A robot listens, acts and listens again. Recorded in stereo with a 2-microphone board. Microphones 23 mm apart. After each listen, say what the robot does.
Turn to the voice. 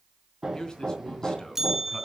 Turn 30° left.
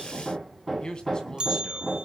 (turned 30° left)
Turn 30° left.
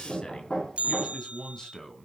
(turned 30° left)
Turn 25° left.
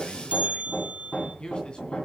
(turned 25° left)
Turn 40° left.
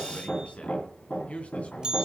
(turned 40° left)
Turn 115° left.
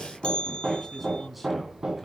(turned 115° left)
Found it: a man speaking, straight ahead, 2 to 4 m away.